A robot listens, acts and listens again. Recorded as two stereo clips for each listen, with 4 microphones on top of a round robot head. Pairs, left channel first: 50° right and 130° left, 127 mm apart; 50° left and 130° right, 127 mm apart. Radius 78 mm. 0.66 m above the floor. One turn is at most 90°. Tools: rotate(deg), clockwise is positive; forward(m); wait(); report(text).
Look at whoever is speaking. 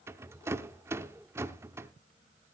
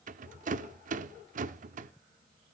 wait()
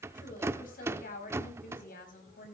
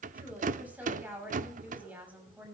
rotate(55)
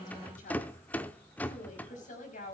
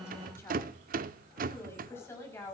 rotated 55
rotate(25)
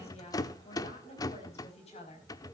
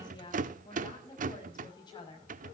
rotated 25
rotate(10)
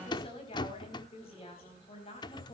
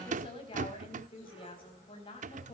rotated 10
report("Found it: a woman speaking, straight ahead.")